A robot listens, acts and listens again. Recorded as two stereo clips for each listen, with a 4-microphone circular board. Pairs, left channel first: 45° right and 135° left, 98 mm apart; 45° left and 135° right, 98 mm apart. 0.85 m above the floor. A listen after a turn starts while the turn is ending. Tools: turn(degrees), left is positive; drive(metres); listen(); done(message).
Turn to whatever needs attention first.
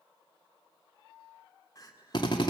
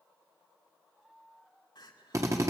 done("Found it: crying, straight ahead, 2 to 4 m away.")